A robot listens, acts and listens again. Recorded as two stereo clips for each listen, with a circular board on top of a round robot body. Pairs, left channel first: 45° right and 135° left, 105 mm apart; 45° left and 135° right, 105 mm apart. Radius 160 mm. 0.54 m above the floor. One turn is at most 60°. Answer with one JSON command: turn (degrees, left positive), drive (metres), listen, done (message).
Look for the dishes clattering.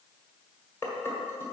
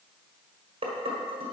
{"turn": -60}
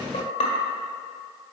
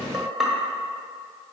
{"turn": -45}
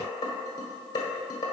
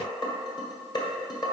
{"done": "Found it: dishes clattering, straight ahead, 1 to 2 m away."}